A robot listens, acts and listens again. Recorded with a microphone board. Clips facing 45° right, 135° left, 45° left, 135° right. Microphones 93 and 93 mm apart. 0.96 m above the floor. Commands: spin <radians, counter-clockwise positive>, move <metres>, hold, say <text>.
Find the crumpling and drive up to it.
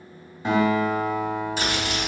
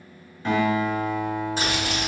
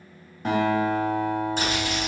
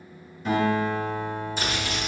spin 1.48
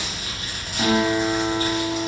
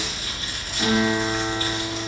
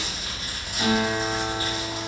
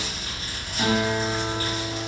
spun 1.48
spin -0.35
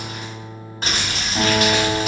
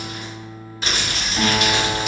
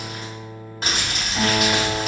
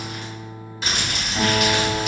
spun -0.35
move 1.0
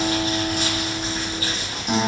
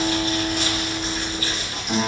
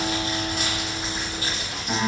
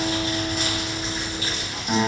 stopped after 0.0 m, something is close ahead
say Blocked. The crumpling is further on, straight ahead.